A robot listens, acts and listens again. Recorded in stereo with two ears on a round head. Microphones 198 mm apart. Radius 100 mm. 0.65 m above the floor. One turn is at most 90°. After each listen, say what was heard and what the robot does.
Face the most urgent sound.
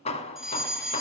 Turn 30° left.
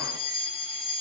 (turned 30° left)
So it is at 150° left. Turn 90° left.
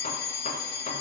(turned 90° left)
The fire alarm is now 60° left. Turn 60° left.
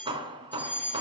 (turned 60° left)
The fire alarm is now 10° left. Turn 10° left.
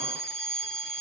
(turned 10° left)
Found it: a fire alarm, straight ahead.